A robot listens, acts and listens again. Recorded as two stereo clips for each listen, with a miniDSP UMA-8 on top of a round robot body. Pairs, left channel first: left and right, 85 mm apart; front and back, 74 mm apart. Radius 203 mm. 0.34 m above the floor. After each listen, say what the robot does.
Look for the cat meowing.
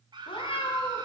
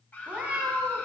Turn 100° left.
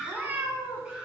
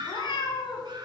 Turn 25° right.
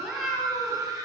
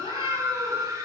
Keep listening.
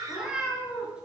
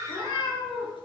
Turn 10° right.
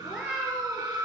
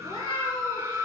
Found it: a cat meowing, straight ahead.